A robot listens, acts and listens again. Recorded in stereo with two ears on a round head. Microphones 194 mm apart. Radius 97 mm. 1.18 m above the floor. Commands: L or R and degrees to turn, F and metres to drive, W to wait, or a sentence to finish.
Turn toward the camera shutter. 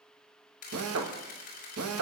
L40
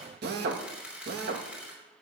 Facing the camera shutter.